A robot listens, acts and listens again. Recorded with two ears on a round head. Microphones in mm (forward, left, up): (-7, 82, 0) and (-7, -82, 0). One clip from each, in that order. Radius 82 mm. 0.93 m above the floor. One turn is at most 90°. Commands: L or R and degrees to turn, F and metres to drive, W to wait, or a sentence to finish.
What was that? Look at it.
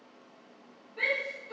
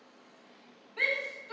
R60
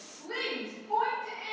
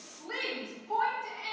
R30
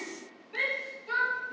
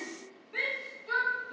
Found it: a shout, straight ahead, 1 to 2 m away.